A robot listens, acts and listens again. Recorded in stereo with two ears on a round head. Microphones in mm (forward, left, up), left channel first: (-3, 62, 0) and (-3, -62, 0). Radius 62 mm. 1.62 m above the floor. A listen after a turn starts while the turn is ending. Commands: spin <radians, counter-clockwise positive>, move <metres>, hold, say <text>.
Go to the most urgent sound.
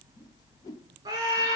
spin -0.52
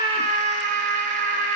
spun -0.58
spin -2.09
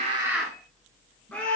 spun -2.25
spin 0.17
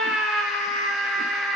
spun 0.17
move 1.0
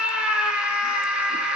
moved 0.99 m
move 1.0
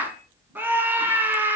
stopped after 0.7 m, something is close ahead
spin -0.26
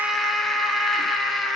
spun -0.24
say I am next to the scream.